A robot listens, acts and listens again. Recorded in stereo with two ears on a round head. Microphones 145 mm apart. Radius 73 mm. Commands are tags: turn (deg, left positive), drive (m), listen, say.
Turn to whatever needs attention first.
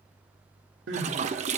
<turn deg="-90"/>
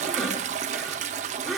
<say>Found it: crying, straight ahead, 2 to 4 m away.</say>